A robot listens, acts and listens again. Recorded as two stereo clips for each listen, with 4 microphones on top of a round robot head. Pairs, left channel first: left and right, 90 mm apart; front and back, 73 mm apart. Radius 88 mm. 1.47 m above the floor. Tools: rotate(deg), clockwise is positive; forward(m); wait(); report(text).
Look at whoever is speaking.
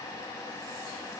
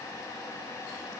wait()
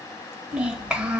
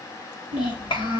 rotate(10)
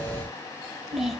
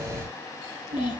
report("Found it: a child speaking, straight ahead, 1 to 2 m away.")